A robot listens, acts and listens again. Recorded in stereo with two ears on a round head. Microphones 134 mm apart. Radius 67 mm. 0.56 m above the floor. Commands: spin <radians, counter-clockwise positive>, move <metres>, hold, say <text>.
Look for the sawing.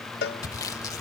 spin 0.44
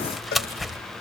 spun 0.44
say Found it: sawing, straight ahead.